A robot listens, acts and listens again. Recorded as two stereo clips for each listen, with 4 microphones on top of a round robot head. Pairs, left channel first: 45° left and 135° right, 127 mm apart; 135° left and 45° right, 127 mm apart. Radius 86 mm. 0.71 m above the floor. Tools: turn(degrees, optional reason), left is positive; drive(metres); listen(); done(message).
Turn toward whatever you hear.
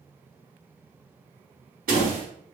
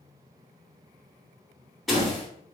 turn(degrees=-135, reason="The door slam: 135° right.")
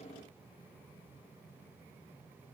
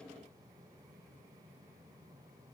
done("I heard a door slam from this way, but can't make it out now.")